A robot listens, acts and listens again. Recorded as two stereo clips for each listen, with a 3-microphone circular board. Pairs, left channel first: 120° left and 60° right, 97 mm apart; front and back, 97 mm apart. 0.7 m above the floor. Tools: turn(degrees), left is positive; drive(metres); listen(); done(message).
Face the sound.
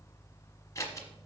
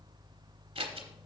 turn(degrees=175)
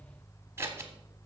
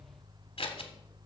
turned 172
done("Found it: scissors, straight ahead.")